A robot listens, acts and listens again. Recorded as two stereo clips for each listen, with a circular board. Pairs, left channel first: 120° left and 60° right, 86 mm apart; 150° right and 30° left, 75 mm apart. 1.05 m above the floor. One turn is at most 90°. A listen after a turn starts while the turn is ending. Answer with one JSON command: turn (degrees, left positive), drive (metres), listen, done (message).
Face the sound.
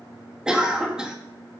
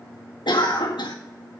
{"turn": -90}
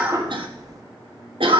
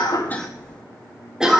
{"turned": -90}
{"turn": -50}
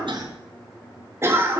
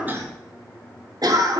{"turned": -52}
{"done": "Found it: a cough, straight ahead."}